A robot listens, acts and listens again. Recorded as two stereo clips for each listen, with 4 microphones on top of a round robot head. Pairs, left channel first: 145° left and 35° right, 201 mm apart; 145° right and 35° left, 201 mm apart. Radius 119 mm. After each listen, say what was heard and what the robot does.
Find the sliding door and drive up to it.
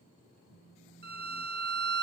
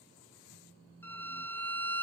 Keep listening.
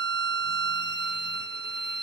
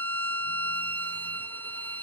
Keep listening.
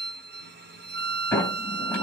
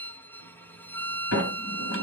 The sliding door: 130° right. Turn 130° right.
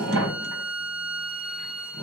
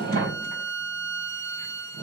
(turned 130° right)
The sliding door is now 10° right. Turn 10° right.
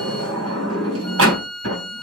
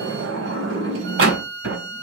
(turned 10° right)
Drive 1.0 m forward.
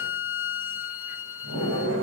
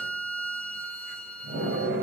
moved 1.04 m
Drive 1.0 m forward.
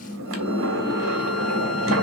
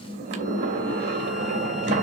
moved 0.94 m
Drive 1.0 m forward.
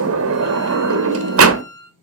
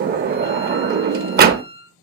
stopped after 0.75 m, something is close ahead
The sliding door is now 15° right. Turn 15° right.
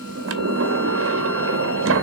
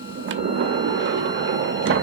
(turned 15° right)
I am next to the sliding door.